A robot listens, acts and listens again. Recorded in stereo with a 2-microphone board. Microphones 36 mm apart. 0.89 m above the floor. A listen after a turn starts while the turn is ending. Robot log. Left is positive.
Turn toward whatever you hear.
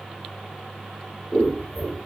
note: The scissors: about 30° left or 150° left.
cmd yaw +30
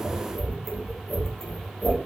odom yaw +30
end: Found it: scissors, straight ahead.